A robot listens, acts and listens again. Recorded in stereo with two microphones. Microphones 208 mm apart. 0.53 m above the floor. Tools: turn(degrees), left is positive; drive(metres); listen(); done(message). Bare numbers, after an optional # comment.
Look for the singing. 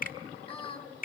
# The singing: about 25° left or 155° left.
turn(25)
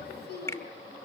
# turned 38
# So it is at 130° left.
turn(130)
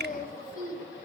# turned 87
# The singing is now 45° left.
turn(45)
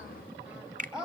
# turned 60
done("Facing the singing.")